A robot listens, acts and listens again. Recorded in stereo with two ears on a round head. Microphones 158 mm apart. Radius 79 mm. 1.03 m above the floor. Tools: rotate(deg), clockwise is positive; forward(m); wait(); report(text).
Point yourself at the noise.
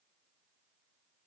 wait()
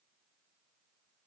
wait()
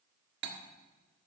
rotate(65)
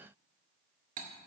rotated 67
rotate(45)
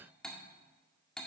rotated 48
report("Facing the cutlery clinking.")